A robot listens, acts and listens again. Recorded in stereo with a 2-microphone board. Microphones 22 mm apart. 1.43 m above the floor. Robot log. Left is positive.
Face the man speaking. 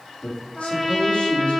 note: The man speaking: about 75° left or 105° left.
cmd yaw +75
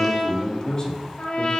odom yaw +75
note: So it is at 35° left.
cmd yaw +35
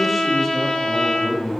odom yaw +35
end: Found it: a man speaking, straight ahead, 2 to 4 m away.